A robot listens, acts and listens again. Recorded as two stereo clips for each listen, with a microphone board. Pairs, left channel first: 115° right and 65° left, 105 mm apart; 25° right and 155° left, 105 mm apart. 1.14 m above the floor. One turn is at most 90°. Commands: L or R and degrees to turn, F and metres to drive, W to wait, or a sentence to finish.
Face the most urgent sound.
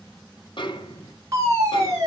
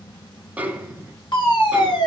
L10
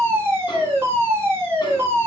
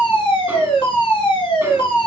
Facing the fire alarm.